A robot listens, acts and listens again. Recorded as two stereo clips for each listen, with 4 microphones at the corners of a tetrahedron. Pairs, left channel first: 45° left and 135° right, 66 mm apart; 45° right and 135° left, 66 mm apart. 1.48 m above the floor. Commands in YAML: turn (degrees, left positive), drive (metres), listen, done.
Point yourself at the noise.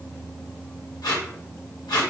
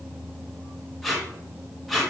turn: 45
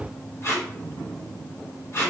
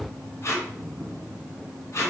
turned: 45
done: "Found it: tape being pulled, straight ahead, 1 to 2 m away."